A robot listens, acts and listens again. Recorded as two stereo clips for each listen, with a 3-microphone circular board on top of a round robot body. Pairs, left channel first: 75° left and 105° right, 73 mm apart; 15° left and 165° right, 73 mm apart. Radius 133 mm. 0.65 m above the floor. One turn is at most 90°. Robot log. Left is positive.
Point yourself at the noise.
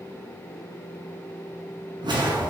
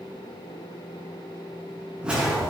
note: The whoosh: 85° right.
cmd yaw -85
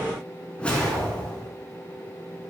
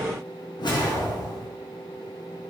end: Facing the whoosh.